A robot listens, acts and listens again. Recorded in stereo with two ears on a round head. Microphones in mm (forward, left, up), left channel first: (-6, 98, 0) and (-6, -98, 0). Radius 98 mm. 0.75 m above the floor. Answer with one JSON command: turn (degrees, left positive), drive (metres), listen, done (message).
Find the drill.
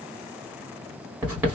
{"listen": true}
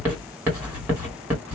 {"listen": true}
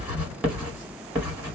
{"done": "I can't make out a drill, only writing."}